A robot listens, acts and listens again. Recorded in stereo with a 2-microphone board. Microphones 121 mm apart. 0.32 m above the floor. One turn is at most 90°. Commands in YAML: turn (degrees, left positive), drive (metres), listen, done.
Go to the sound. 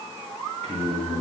turn: -65
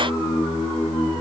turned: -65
drive: 1.0
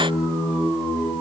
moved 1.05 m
turn: -10
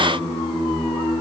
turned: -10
drive: 1.0
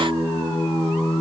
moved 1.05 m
turn: 10
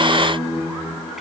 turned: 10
drive: 1.0
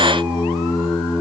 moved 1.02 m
turn: -10
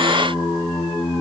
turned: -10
drive: 1.0
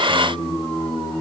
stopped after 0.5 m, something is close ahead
turn: 10
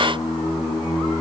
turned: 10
done: "I am next to the singing."